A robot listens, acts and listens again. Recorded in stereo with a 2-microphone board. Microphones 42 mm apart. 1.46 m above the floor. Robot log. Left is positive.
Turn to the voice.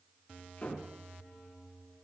cmd idle
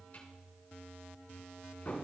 cmd idle
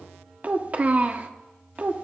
note: The child speaking: about 35° right or 145° right.
cmd yaw -35
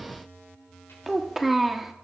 end: Found it: a child speaking, straight ahead.